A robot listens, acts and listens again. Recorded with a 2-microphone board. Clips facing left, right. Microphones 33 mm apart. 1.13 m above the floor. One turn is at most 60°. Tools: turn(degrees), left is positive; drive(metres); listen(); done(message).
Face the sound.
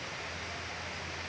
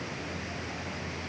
listen()
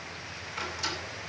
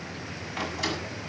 turn(degrees=-60)
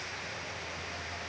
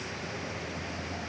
listen()
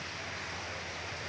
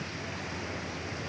done("I heard a door slam, but can't make it out now. It was about 5° right or 55° right.")